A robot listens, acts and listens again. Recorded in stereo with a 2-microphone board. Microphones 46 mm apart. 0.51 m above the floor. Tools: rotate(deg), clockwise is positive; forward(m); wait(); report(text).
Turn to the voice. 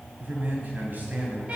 rotate(40)
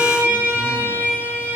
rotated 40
wait()
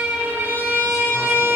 wait()
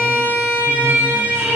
report("I heard a man speaking, but can't make it out now. It was about straight ahead or 100° right.")